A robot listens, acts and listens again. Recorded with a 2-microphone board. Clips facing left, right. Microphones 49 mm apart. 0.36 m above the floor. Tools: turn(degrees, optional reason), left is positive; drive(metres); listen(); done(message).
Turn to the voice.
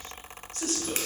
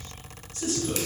turn(degrees=60, reason="The man speaking: about 60° left or 120° left.")
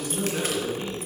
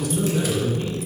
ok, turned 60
turn(degrees=30, reason="So it is at 30° left.")
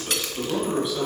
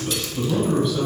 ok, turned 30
done("Facing the man speaking.")